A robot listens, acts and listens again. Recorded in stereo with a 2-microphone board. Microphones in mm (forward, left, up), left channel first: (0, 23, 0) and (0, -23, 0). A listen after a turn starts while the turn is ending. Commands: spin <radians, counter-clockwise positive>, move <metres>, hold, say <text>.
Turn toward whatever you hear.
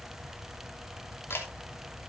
spin 0.96
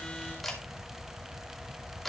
say Facing the camera shutter, 2 to 4 m away.